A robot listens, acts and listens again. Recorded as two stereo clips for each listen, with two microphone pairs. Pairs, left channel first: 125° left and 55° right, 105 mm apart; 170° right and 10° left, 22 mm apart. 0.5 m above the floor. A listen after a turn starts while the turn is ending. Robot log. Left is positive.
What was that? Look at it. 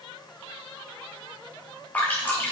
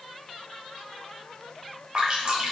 note: The dripping: 50° left.
cmd yaw +50
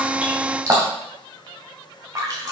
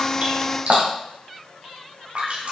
end: Facing the dripping, 2 to 4 m away.